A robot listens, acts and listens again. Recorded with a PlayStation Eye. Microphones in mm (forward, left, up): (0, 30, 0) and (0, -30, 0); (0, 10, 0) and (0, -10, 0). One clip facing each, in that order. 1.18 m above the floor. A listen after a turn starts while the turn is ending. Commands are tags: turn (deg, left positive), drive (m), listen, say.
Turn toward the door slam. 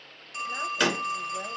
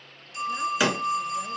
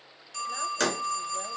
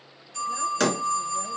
<turn deg="-30"/>
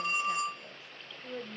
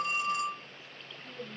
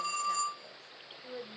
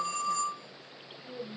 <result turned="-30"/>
<listen/>
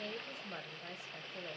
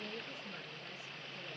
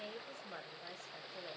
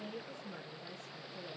<say>I heard a door slam, but can't make it out now. It was about 25° left or 145° right.</say>